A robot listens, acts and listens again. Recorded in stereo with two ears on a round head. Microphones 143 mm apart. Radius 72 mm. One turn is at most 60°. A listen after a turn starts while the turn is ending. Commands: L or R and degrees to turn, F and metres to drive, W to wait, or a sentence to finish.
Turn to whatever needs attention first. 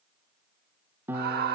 R60
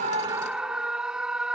Found it: a scream, straight ahead.